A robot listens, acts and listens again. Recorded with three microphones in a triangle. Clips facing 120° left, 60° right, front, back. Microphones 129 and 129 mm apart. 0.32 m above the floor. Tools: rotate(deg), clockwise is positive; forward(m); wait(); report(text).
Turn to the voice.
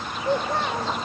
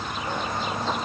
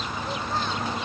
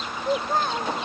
rotate(-140)
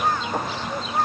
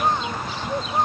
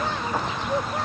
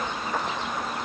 rotate(-10)
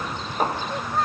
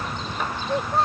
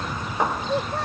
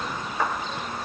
report("Found it: a child speaking, straight ahead.")